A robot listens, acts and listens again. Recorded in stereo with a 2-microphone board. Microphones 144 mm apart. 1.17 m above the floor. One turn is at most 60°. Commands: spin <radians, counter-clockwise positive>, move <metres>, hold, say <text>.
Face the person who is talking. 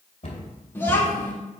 spin 0.26
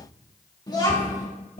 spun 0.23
spin 1.05
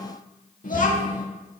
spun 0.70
spin 1.05
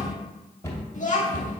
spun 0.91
spin 1.05
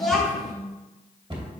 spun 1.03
say Found it: a child speaking, straight ahead, 1 to 2 m away.